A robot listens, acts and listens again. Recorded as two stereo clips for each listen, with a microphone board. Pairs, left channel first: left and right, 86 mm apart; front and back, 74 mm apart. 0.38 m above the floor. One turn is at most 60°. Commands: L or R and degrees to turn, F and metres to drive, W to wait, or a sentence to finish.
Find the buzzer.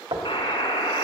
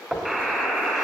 L60
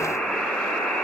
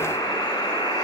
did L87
L10
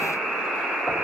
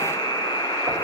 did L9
Found it: a buzzer, straight ahead, 2 to 4 m away.